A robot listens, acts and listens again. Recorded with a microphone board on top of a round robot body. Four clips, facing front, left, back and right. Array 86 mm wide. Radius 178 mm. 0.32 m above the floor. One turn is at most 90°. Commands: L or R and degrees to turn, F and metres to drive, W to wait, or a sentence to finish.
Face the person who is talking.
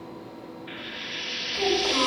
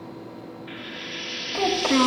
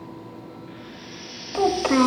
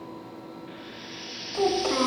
L90
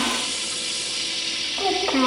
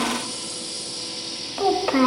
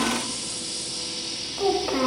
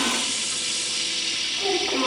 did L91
L75
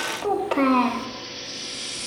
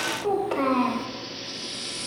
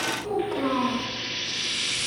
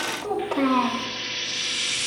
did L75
Facing the child speaking, 1 to 2 m away.